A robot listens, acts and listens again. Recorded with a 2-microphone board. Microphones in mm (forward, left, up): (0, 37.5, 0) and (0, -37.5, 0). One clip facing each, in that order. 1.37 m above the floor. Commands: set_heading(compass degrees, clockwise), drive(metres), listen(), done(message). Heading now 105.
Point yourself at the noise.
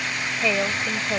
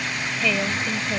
set_heading(85)
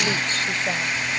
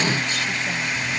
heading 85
listen()
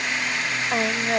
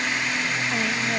set_heading(305)
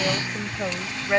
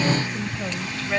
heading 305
set_heading(280)
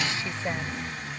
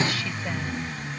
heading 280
listen()
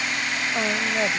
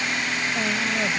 set_heading(255)
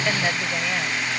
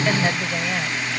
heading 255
listen()
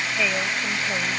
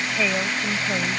done("Facing the woman speaking.")